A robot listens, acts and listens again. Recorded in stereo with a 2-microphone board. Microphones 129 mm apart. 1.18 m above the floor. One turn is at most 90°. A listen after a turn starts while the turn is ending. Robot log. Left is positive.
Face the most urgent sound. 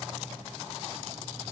cmd idle
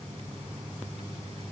cmd idle
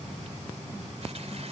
end: I can't make out anything urgent to turn to.